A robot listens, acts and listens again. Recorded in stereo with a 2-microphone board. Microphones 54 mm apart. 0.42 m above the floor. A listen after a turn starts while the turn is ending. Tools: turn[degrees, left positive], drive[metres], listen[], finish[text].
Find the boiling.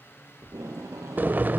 Thought: The boiling: about 35° right or 145° right.
Action: turn[-35]
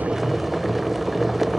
Action: finish[Facing the boiling, under 1 m away.]